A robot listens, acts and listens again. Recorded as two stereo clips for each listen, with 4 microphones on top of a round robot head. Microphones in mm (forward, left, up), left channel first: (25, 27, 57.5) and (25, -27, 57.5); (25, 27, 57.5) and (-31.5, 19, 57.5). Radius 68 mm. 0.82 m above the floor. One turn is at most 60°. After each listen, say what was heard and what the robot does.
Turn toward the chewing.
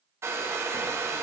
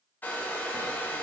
Keep listening.
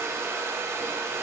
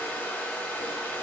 Keep listening.
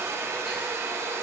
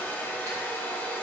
I can't make out chewing, only a hair dryer.